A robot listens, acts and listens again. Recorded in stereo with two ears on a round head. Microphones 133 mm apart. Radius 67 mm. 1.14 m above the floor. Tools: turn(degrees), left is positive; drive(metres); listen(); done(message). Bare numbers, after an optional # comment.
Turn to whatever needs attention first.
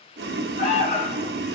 # The alarm: about 50° left or 130° left.
turn(50)
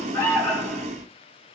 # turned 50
# So it is at 15° left.
turn(15)
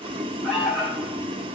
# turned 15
done("Facing the alarm.")